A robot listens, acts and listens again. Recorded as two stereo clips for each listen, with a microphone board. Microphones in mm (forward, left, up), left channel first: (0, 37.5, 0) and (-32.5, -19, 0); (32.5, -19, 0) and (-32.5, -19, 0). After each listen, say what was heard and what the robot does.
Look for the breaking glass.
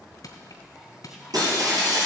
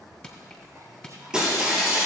The breaking glass: 100° right. Turn 100° right.
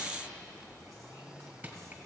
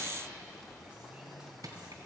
Facing where the breaking glass came from. I can't hear it now.